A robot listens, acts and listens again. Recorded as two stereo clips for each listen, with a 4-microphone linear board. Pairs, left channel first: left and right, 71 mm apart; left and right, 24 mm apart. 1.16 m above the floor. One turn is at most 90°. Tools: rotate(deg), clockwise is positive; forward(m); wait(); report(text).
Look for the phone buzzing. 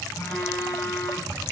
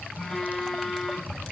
rotate(-40)
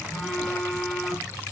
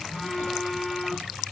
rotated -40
report("Found it: a phone buzzing, straight ahead.")